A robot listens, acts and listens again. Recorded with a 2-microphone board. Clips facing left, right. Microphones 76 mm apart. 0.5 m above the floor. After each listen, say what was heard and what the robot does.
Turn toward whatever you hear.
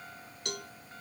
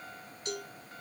The cowbell: about 70° left or 110° left. Turn 70° left.
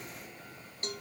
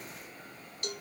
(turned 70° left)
So it is at 40° left. Turn 40° left.
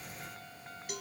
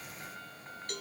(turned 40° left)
The cowbell is now 10° left. Turn 10° left.
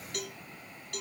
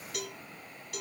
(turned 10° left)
Found it: a cowbell, straight ahead.